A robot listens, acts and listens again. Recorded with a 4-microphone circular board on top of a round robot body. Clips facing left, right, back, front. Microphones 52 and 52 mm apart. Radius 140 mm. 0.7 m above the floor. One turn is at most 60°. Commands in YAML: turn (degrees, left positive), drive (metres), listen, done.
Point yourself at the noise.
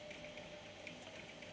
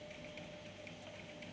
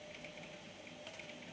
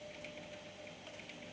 listen: true
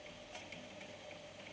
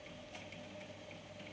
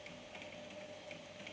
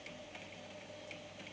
listen: true
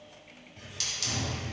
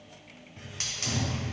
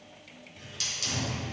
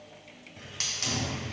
turn: -35
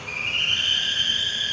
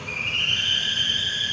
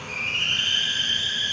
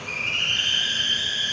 done: "Facing the hiss, 1 to 2 m away."